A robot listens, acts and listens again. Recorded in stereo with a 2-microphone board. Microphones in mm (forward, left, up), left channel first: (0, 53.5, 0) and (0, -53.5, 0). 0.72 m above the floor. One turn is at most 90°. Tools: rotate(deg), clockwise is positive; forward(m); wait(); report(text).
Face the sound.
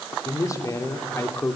rotate(-25)
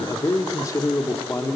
rotate(-25)
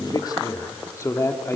rotate(-25)
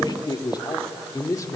rotate(-30)
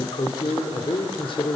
rotate(-90)
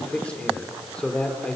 rotate(-10)
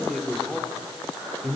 report("Found it: a man speaking, straight ahead, 2 to 4 m away.")